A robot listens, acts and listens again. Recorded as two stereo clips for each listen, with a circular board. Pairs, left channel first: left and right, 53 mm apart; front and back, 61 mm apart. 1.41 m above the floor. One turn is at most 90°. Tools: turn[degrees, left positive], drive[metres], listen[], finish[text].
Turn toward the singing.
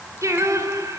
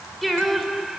Thought: The singing: 95° right.
Action: turn[-90]
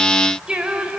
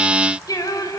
Thought: The singing is now 20° right.
Action: turn[-20]
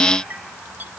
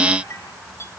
Action: listen[]
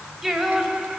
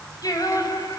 Action: finish[Found it: singing, straight ahead, over 4 m away.]